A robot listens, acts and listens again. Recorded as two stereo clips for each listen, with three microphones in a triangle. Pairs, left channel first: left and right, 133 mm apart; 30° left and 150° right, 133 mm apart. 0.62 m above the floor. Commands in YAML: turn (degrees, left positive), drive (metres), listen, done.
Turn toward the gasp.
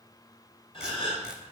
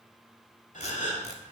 turn: 45
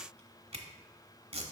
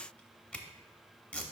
done: "Facing where the gasp came from. I can't hear it now."